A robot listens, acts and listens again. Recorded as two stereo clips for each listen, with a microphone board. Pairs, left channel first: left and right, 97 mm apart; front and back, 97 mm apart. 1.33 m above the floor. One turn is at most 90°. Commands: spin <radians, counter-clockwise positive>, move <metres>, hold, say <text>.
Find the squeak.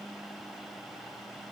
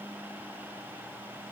hold
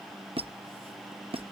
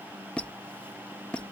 spin -1.40
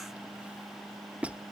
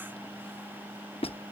spin -0.26
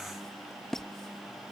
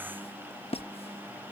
say Facing the squeak.